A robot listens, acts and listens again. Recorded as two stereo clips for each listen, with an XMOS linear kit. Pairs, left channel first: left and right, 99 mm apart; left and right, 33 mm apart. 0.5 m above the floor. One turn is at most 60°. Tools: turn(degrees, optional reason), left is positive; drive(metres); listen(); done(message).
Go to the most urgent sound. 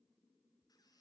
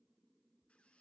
listen()
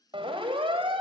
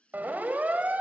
turn(degrees=-60, reason="The siren: about 60° right or 120° right.")
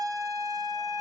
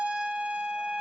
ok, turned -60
turn(degrees=-45, reason="So it is at 45° right.")
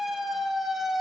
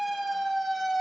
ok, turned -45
drive(metres=1.0)
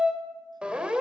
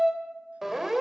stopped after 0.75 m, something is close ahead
turn(degrees=-10, reason="The siren is now 10° right.")
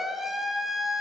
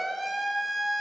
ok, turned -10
done("Something is in my way. I am facing the siren but have not reached it.")